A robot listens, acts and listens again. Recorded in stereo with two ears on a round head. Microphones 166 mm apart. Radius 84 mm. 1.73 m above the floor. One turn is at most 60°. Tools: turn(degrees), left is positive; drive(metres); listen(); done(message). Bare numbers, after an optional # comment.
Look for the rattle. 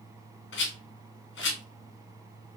# The rattle: about 70° left or 110° left.
turn(60)
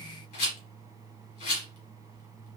# So it is at 40° left.
turn(40)
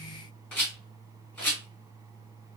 # The rattle is now 10° left.
turn(10)
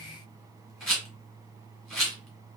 done("Facing the rattle, 1 to 2 m away.")